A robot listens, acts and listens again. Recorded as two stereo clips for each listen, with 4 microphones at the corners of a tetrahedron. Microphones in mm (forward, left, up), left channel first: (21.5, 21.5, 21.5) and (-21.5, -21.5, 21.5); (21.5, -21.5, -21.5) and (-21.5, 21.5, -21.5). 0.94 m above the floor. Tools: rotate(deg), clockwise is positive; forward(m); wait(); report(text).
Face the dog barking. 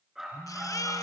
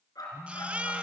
rotate(55)
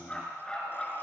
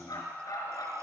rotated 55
rotate(30)
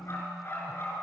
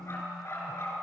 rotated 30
report("Found it: a dog barking, straight ahead, over 4 m away.")